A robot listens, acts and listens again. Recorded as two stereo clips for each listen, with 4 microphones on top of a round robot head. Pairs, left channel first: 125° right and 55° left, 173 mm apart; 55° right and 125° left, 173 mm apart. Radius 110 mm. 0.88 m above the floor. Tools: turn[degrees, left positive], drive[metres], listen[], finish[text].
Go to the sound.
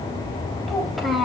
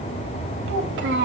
Thought: The child speaking: 140° left.
Action: turn[140]
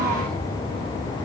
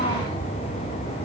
Action: listen[]
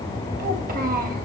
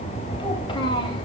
Thought: The child speaking is now 10° left.
Action: turn[10]
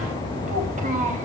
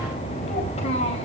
Action: drive[1.0]
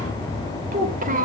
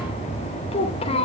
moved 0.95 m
Action: drive[1.0]
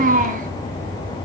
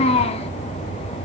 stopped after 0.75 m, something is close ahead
Action: finish[Arrived at the child speaking, straight ahead.]